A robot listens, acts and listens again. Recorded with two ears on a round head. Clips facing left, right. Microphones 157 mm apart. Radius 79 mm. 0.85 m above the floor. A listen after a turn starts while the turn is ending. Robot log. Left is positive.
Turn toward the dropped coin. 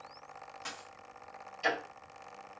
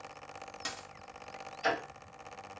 note: The dropped coin: about 45° right or 135° right.
cmd yaw -45
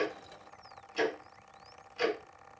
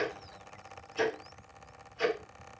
cmd idle
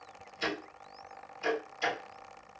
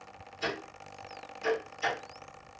end: I heard a dropped coin, but can't make it out now. It was about straight ahead or 90° right.